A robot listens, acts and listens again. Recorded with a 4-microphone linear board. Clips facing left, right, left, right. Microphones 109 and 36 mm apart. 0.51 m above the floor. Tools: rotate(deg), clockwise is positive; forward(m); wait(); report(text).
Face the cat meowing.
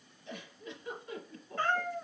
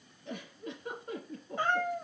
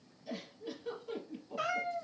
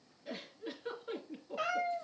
rotate(20)
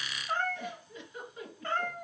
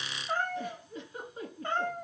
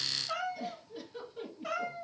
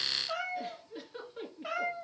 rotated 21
rotate(25)
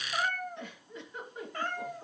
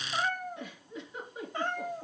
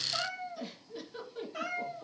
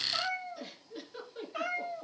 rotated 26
rotate(25)
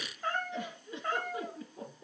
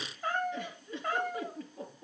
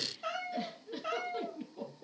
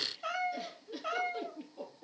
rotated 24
report("Found it: a cat meowing, straight ahead.")